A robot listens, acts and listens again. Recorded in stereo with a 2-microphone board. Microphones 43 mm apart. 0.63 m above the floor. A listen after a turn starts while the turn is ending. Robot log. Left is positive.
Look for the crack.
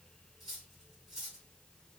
cmd idle
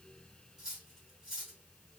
cmd idle
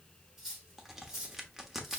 cmd yaw -30
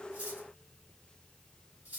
cmd idle
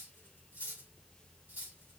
end: I heard a crack, but can't make it out now. It was about 20° left or 140° right.